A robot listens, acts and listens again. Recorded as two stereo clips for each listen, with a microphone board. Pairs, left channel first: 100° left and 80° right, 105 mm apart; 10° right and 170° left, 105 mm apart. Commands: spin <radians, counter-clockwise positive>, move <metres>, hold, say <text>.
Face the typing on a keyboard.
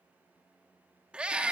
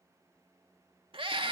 hold
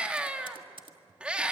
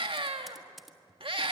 spin -1.75
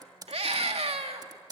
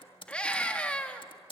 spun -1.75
spin -0.52
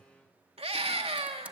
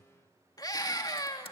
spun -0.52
say Found it: typing on a keyboard, straight ahead, 1 to 2 m away.